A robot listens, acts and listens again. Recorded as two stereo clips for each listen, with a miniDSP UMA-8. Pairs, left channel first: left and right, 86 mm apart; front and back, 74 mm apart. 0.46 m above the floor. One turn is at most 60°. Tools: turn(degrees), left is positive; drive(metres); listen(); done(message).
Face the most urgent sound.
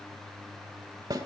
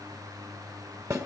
listen()
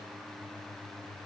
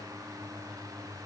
listen()
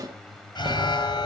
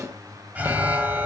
turn(degrees=60)
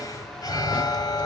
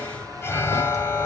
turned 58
turn(degrees=55)
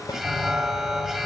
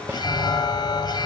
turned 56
done("Found it: an alarm, straight ahead, 2 to 4 m away.")